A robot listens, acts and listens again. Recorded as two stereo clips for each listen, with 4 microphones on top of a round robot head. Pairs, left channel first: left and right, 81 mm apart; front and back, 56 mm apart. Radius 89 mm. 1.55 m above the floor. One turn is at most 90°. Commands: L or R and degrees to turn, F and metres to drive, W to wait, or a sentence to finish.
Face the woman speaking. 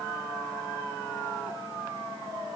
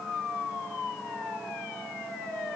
W
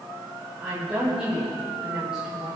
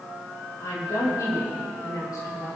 Facing the woman speaking, over 4 m away.